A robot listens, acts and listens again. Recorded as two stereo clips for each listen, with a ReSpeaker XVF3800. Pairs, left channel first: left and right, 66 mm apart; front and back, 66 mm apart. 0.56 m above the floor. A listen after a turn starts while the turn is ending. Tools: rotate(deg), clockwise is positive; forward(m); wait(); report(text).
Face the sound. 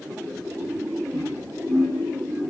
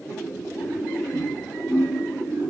rotate(145)
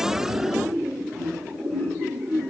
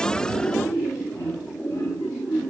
rotate(-10)
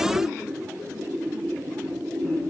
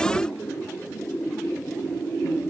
wait()
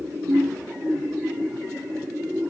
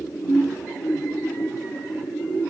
report("Found it: laughter, straight ahead, over 4 m away.")